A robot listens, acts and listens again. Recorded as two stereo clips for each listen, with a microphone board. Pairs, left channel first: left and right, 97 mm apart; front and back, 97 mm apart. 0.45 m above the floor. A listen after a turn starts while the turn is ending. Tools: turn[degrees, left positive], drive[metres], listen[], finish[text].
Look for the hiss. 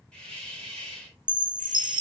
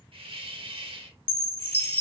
Thought: The hiss: 170° left.
Action: turn[170]
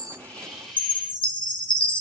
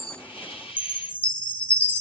Action: finish[Facing the hiss, under 1 m away.]